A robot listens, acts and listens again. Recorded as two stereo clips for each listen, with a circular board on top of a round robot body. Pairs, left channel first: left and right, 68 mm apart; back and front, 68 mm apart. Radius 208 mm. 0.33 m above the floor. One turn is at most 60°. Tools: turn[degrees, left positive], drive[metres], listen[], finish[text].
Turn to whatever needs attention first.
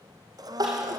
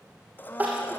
Thought: The crying: 70° right.
Action: turn[-60]
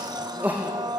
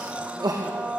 Thought: The crying is now 25° right.
Action: turn[-25]
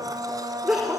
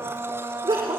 Thought: The crying is now 10° right.
Action: turn[-10]
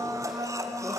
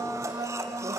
Action: listen[]
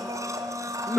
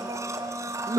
Action: finish[Found it: crying, straight ahead, over 4 m away.]